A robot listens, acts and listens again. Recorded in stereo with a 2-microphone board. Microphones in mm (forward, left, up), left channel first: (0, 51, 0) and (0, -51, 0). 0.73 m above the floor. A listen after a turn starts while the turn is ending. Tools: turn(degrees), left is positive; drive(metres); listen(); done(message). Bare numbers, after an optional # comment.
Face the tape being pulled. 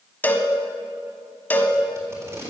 # The tape being pulled: about 30° right or 150° right.
turn(-30)
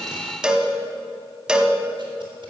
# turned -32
listen()
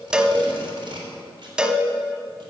# So it is at 120° right.
turn(-120)
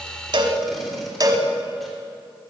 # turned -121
listen()
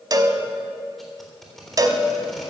done("Facing the tape being pulled.")